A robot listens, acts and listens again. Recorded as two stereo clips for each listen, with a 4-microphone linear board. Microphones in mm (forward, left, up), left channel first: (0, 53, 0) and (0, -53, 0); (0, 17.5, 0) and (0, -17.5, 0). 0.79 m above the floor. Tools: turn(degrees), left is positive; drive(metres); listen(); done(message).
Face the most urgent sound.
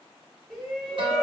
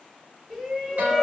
turn(degrees=30)
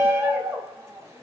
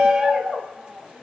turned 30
turn(degrees=-25)
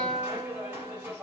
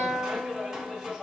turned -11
turn(degrees=-15)
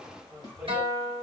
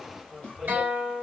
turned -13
done("Facing the shout, 1 to 2 m away.")